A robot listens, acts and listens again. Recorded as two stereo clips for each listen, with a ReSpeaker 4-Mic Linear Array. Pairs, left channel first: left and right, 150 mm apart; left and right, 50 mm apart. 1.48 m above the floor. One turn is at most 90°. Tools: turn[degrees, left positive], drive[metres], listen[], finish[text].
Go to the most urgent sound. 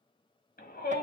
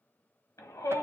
Action: turn[90]
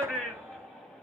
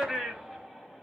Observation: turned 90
Action: drive[1.0]
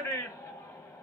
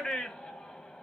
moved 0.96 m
Thought: The shout is now 20° left.
Action: turn[20]
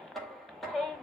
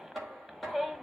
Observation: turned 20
Action: drive[1.0]
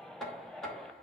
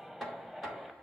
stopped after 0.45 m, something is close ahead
Action: listen[]
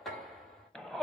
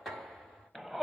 Action: finish[I am next to the shout.]